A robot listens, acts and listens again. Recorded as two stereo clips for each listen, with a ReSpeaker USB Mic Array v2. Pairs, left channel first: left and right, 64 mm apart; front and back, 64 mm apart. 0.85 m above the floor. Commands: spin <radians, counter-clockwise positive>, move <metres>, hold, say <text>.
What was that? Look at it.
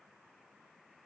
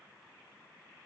hold
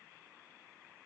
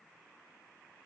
hold
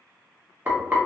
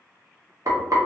spin -2.62
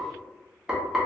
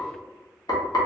spin -0.17
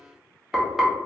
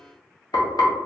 say Facing the frying, under 1 m away.